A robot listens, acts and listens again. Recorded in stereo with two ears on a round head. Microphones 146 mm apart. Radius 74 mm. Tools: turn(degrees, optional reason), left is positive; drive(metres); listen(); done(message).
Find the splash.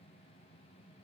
listen()
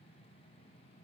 listen()
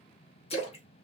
turn(degrees=40, reason="The splash: about 40° left or 140° left.")
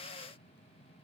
listen()
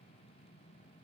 done("I heard a splash, but can't make it out now. It was about straight ahead or 100° left.")